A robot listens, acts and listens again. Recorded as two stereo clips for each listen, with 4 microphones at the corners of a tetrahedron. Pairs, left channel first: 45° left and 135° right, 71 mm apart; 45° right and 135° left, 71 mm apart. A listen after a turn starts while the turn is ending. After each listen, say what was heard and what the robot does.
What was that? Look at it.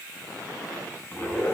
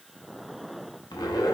The zipper: 20° right. Turn 20° right.
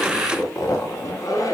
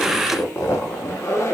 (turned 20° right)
Found it: a zipper, straight ahead.